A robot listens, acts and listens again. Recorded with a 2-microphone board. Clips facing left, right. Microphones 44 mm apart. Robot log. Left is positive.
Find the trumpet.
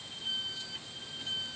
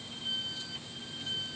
cmd idle
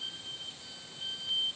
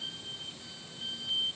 cmd idle
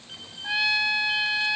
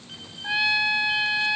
cmd yaw -30
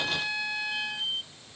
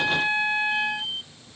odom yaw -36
note: So it is at 135° right.
cmd yaw -135
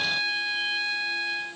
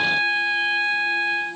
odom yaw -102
note: The trumpet is now 35° right.
cmd yaw -35
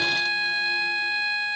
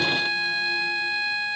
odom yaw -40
end: Facing the trumpet.